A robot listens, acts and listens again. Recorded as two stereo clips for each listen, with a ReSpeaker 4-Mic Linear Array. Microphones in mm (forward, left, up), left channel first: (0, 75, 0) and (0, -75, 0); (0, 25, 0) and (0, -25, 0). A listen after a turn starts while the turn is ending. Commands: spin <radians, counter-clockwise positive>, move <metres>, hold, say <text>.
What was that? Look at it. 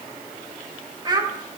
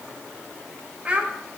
spin -0.44
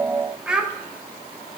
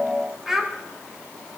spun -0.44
say Facing the child speaking, 1 to 2 m away.